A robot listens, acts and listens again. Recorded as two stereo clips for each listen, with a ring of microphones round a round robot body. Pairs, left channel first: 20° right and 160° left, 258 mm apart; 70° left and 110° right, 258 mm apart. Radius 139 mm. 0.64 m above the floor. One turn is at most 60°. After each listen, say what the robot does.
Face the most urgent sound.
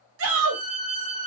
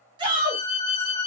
Turn 60° left.
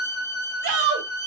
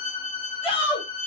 Turn 60° left.
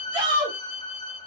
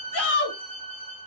Turn 60° left.
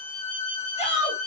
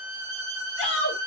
Turn 40° left.
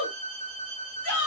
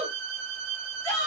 Turn 10° right.
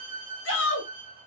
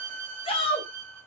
Found it: a shout, straight ahead.